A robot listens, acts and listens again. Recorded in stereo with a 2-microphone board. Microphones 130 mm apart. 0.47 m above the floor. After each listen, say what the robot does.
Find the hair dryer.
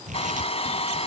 Turn 50° left.
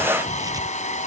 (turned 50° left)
Turn 75° left.
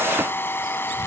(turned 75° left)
Turn 15° left.
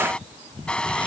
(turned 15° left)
Facing the hair dryer.